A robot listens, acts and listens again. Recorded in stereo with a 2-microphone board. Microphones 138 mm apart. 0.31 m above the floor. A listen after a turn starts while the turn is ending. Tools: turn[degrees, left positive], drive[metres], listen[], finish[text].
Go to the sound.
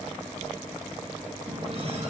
Thought: The running tap: about 45° right or 135° right.
Action: turn[-45]
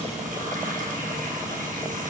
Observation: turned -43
Thought: So it is at 90° right.
Action: turn[-90]
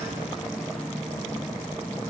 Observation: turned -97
Action: drive[1.0]
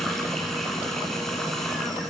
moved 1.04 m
Action: drive[1.0]
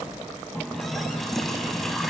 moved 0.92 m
Action: drive[1.0]
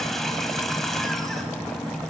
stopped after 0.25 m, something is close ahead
Action: finish[I am next to the running tap.]